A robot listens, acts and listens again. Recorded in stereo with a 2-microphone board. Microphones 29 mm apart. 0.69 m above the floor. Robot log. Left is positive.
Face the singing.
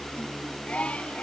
note: The singing: about 55° left or 125° left.
cmd yaw +55
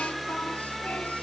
cmd idle
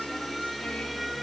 cmd idle
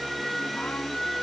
end: I heard singing, but can't make it out now. It was about straight ahead or 70° left.